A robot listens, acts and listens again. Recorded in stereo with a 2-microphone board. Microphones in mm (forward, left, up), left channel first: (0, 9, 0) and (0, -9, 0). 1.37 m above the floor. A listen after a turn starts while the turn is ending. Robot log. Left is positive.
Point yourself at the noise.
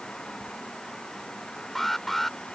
note: The alarm: about 20° left or 160° left.
cmd yaw +20
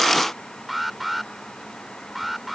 end: Facing the alarm.